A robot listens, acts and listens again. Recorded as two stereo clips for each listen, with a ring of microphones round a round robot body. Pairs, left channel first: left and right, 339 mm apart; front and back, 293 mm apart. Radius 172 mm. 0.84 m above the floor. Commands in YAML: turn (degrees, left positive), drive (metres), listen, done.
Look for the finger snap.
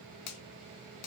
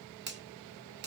turn: 125
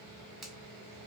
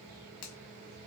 done: "Found it: a finger snap, straight ahead."